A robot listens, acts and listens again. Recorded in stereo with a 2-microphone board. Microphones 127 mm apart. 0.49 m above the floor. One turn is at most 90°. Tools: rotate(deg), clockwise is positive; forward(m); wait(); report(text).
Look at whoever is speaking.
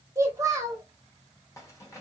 rotate(25)
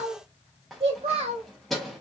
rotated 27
rotate(90)
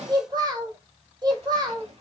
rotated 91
rotate(35)
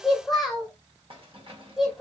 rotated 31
report("Facing the child speaking, 1 to 2 m away.")